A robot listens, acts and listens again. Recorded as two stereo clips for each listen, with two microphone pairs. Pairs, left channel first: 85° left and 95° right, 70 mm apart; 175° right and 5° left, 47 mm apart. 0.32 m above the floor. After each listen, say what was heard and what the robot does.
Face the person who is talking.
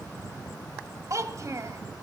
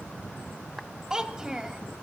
The child speaking: 65° right. Turn 65° right.
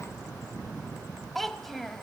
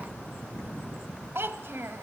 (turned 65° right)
Facing the child speaking, 1 to 2 m away.